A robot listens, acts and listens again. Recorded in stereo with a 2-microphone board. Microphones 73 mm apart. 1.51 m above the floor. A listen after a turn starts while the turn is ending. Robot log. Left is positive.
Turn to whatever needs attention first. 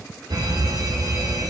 note: The fire alarm: about 65° right or 115° right.
cmd yaw -65
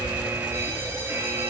note: So it is at 40° right.
cmd yaw -40
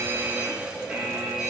note: The fire alarm is now 15° right.
cmd yaw -15
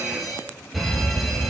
end: Found it: a fire alarm, straight ahead, over 4 m away.